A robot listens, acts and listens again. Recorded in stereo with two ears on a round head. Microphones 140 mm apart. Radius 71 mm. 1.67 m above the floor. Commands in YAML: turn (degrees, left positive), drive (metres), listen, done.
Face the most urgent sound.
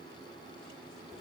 listen: true
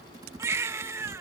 turn: -20
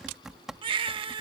turn: -135
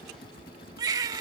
turn: -30
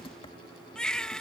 done: "Facing the baby crying."